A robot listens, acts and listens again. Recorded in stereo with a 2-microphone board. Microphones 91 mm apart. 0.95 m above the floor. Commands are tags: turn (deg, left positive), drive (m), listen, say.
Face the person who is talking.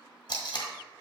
<listen/>
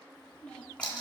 <turn deg="30"/>
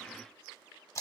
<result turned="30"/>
<listen/>
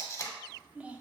<turn deg="-15"/>
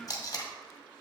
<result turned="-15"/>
<say>Found it: a child speaking, straight ahead, under 1 m away.</say>